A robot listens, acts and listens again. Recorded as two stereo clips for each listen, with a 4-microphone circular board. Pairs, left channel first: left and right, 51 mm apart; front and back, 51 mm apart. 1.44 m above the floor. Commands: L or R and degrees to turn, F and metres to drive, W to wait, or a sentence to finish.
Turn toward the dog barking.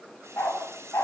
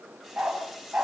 L115
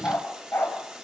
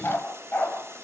L45
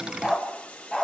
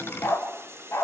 L10
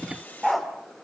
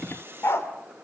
Facing the dog barking.